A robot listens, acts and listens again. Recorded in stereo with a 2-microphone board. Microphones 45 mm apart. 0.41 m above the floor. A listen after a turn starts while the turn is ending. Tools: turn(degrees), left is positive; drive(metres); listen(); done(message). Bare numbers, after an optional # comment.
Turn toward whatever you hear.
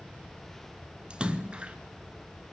# The splash: about 25° right or 155° right.
turn(-25)
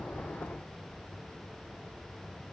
listen()
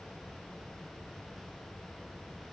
done("I heard a splash, but can't make it out now. It was about straight ahead or 130° right.")